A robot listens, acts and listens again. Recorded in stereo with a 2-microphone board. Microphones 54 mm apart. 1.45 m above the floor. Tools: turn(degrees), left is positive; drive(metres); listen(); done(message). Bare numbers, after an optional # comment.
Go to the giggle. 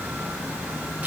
listen()
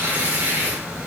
listen()
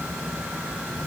done("I can't make out a giggle to turn to.")